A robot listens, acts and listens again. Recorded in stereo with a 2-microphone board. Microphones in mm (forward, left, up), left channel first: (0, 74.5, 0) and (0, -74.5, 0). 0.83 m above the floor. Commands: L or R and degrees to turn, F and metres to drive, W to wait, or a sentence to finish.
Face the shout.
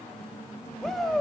L30
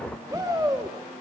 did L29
R25
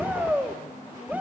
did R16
R10
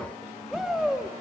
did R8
Facing the shout.